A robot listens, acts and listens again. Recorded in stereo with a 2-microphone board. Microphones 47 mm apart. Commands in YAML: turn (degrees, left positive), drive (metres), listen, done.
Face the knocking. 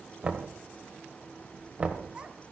turn: -20
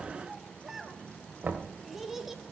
turn: -140
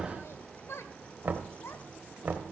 turn: -40
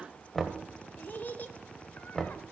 done: "Facing the knocking."